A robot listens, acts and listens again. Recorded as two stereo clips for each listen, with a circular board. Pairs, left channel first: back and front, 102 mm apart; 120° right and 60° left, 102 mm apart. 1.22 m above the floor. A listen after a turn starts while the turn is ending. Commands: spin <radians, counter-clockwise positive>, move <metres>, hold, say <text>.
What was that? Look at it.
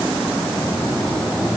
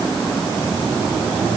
hold
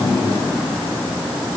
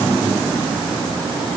hold
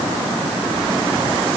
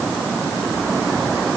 say I can't make out anything.